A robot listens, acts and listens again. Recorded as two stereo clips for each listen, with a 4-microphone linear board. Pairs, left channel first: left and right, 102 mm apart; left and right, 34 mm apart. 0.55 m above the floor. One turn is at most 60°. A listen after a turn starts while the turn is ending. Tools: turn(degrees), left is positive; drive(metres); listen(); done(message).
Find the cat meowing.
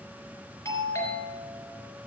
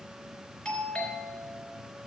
listen()
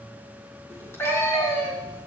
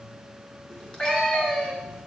turn(degrees=25)
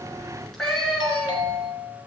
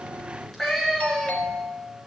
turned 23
done("Found it: a cat meowing, straight ahead, 2 to 4 m away.")